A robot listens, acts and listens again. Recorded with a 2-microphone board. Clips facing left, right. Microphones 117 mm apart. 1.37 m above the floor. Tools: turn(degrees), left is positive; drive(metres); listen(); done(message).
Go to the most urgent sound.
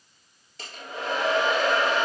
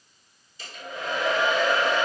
listen()
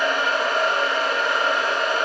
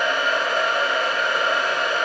listen()
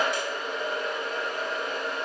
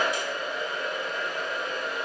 done("I can't make out anything urgent, only a hair dryer.")